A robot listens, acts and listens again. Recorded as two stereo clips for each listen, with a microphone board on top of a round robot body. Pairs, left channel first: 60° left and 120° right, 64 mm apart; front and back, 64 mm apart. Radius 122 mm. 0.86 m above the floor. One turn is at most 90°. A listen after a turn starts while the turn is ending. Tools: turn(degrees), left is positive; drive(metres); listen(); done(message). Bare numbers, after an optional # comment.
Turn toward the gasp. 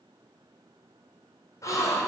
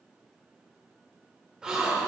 # The gasp: 100° left.
turn(90)
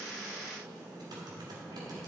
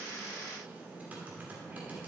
# Nothing new. It was at 10° left.
turn(10)
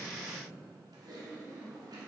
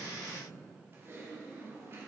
done("Facing where the gasp came from. I can't hear it now.")